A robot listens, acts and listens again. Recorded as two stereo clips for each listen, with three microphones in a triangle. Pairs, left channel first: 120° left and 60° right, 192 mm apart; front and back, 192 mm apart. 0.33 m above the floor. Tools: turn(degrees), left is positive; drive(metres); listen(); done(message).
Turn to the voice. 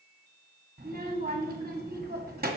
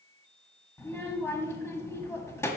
turn(degrees=-75)
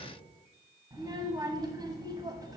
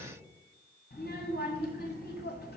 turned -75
done("Facing the child speaking.")